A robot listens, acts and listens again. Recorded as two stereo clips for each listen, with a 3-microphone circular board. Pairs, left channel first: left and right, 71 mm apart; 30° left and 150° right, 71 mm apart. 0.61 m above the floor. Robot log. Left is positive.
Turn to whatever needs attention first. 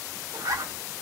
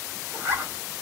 cmd idle
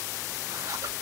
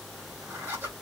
cmd idle
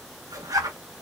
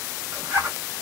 end: I can't make out anything urgent to turn to.